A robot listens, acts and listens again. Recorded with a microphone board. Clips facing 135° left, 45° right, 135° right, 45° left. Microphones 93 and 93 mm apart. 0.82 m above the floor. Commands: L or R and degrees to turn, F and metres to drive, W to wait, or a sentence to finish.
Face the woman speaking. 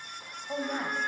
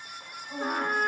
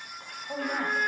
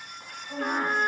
L180
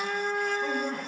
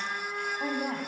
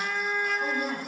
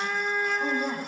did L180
R30
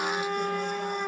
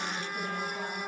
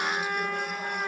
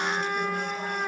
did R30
W
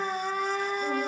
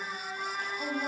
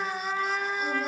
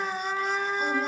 W
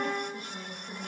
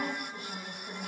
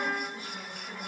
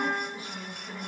R25
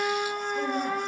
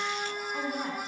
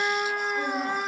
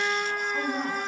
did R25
Found it: a woman speaking, straight ahead, over 4 m away.